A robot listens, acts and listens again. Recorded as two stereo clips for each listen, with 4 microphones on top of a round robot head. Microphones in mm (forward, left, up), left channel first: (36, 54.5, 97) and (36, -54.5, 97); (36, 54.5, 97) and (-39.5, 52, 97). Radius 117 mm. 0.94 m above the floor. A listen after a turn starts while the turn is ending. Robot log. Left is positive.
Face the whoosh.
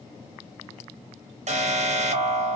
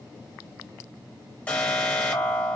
cmd idle
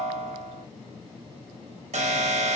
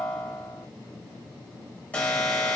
cmd idle
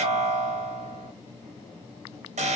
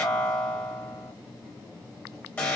end: I can't make out a whoosh, only an alarm.